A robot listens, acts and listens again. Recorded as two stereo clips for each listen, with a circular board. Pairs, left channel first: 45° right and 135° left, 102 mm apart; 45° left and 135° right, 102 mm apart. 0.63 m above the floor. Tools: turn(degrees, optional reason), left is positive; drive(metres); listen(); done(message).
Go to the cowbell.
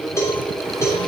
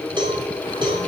turn(degrees=-105, reason="The cowbell: 105° right.")
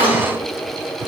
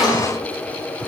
listen()
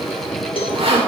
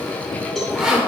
turn(degrees=-45, reason="The cowbell is now 45° right.")
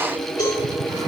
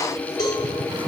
drive(metres=1.0)
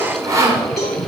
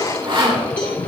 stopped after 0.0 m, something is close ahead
turn(degrees=10, reason="The cowbell is now 10° left.")
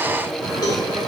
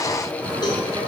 done("Something is in my way. I am facing the cowbell but have not reached it.")